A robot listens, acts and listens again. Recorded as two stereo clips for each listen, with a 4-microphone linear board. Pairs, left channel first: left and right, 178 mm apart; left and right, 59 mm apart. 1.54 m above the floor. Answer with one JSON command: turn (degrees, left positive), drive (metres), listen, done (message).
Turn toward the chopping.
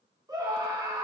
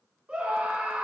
{"listen": true}
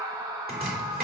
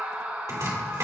{"turn": -60}
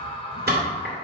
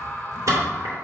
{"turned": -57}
{"turn": -60}
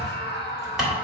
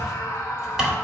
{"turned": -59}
{"done": "Facing the chopping, 2 to 4 m away."}